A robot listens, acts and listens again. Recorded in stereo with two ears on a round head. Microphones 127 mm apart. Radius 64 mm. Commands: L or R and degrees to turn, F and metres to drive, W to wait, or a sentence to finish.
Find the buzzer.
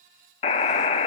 L45
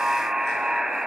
Found it: a buzzer, straight ahead.